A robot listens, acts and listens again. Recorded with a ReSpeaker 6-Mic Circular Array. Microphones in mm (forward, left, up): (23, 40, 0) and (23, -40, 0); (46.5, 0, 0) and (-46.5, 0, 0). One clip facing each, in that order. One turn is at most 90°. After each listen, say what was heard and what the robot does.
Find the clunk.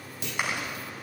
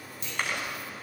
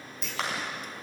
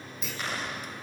The clunk: 90° left. Turn 90° left.
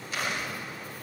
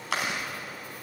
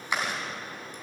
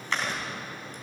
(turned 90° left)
I heard a clunk from this way, but can't make it out now.